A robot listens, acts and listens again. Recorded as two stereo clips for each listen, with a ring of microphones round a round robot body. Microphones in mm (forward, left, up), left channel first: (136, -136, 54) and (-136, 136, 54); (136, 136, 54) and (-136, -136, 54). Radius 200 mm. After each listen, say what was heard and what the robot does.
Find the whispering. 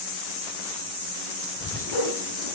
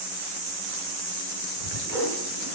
The whispering: 40° left. Turn 40° left.
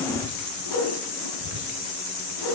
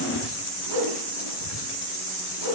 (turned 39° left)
Found it: whispering, straight ahead, 2 to 4 m away.